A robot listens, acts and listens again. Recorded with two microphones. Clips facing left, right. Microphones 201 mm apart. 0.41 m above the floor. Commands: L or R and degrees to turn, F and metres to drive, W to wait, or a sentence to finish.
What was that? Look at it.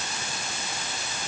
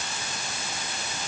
W
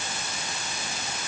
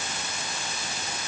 W
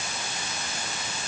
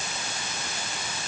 I can't make out anything.